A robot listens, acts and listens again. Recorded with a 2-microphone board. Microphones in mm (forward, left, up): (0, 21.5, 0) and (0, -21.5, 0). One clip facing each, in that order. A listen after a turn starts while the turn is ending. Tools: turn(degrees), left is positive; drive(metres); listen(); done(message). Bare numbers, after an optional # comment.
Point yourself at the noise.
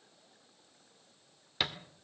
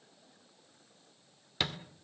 turn(30)
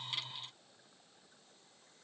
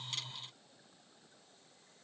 listen()
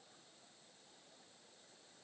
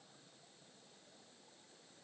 done("I heard a thud, but can't make it out now. It was about 25° right or 145° left.")